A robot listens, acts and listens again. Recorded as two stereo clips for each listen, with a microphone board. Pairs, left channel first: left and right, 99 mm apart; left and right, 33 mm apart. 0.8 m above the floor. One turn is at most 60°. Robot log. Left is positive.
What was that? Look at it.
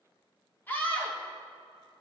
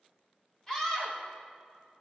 note: The scream: about 20° left or 160° left.
cmd yaw +20
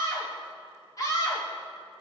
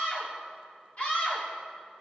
note: So it is at 140° left.
cmd yaw +60
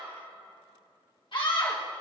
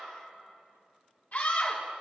note: The scream is now 65° left.
cmd yaw +60
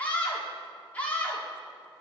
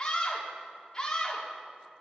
note: The scream is now 20° left.
cmd yaw +20
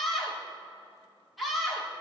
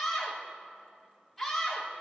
end: Facing the scream.